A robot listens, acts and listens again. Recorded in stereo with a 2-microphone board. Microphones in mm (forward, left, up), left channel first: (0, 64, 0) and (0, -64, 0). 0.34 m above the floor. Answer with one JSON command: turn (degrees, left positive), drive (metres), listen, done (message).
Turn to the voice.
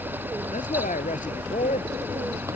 {"turn": 90}
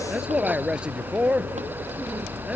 {"turn": -10}
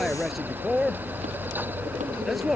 {"done": "Found it: a man speaking, straight ahead."}